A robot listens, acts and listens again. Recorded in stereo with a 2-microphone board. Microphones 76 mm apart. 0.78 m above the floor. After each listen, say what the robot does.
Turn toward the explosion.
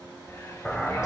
Turn 30° left.
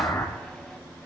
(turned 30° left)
Turn 135° left.
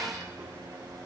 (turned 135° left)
I heard an explosion from this way, but can't make it out now.